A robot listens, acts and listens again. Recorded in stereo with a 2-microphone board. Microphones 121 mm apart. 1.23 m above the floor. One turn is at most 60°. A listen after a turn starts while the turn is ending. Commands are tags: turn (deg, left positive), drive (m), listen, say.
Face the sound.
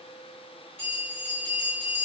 <turn deg="60"/>
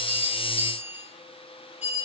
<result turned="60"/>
<turn deg="60"/>
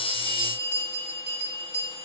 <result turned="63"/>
<say>Found it: a bell, straight ahead, 1 to 2 m away.</say>